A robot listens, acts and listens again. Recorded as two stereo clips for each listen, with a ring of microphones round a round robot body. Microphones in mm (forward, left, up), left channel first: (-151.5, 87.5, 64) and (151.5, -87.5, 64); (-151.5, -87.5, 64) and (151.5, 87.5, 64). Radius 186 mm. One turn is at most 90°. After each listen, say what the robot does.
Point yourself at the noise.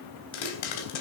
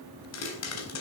Turn 90° left.
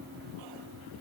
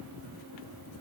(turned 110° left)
Turn 50° left.
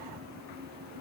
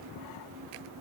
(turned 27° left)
Turn 25° left.
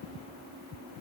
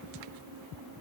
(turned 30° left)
Facing where the pop came from. I can't hear it now.